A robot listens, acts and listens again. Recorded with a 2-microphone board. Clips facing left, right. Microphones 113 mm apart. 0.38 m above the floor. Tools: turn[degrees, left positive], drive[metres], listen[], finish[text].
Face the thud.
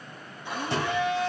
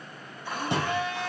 Thought: The thud: about 15° right or 165° right.
Action: turn[-15]
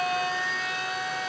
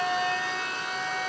Action: listen[]
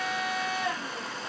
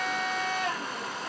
Action: finish[I heard a thud, but can't make it out now. It was about straight ahead or 150° right.]